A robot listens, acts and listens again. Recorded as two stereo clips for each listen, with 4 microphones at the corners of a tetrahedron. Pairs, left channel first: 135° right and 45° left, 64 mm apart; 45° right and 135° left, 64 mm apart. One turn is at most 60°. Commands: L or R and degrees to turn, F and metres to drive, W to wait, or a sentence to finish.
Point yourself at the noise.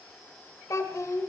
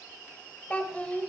R60
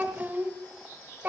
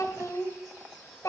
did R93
R15
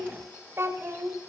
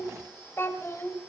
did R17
Facing the child speaking.